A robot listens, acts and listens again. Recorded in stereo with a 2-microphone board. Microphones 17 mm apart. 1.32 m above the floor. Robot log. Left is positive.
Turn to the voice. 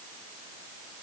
cmd idle
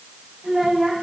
note: The child speaking: about 40° right or 140° right.
cmd yaw -40
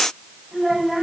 end: Found it: a child speaking, straight ahead.